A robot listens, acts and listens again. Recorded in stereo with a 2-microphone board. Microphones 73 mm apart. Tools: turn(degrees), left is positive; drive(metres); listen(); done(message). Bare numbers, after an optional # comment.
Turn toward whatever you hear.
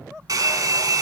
# The hair dryer: about 60° right or 120° right.
turn(-60)
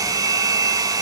# So it is at 60° right.
turn(-60)
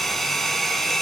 done("Facing the hair dryer, 1 to 2 m away.")